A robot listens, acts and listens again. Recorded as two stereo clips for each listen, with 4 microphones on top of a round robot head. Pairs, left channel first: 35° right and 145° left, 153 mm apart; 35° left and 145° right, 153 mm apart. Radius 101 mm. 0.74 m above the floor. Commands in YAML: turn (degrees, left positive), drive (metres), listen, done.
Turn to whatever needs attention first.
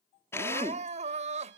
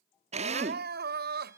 turn: -165
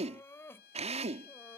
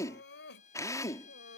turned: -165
turn: 45
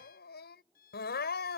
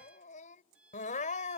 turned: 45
turn: -10
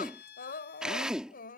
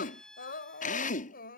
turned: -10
done: "Facing the crying."